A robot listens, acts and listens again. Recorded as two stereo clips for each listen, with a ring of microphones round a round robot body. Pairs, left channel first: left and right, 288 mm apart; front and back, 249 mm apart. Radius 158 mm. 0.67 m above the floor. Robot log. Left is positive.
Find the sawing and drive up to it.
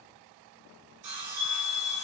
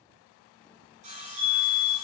note: The sawing: 115° right.
cmd yaw -115
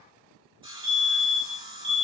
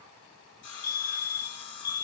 note: The sawing is now 20° right.
cmd yaw -20
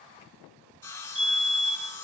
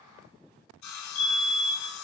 cmd fwd 1.0
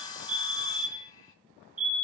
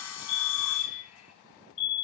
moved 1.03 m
note: The sawing is now 15° left.
cmd yaw +15
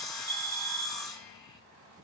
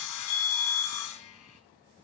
cmd fwd 1.0
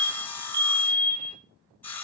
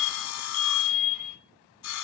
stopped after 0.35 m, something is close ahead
end: Arrived at the sawing, straight ahead.